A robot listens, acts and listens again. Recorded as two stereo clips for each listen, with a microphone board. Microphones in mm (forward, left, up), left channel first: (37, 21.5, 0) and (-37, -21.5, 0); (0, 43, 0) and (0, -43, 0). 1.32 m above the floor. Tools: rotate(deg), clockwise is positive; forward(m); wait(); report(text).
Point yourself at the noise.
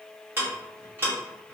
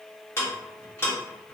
rotate(-150)
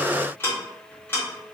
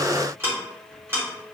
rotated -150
rotate(30)
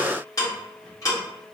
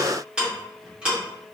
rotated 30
rotate(10)
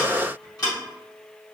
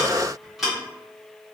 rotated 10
report("Found it: ticking, straight ahead, 1 to 2 m away.")